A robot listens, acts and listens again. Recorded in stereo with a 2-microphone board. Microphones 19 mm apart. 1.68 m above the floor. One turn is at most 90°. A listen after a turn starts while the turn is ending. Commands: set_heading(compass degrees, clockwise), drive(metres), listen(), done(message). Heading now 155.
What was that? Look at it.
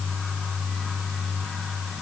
listen()
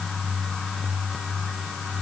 listen()
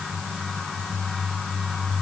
done("I can't make out anything.")